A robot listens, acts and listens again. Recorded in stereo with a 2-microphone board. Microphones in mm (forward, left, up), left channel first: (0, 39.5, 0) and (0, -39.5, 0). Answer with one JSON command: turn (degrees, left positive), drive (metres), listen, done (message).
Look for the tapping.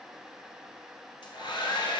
{"listen": true}
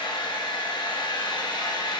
{"listen": true}
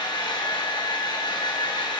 {"done": "I can't make out tapping, only a hair dryer."}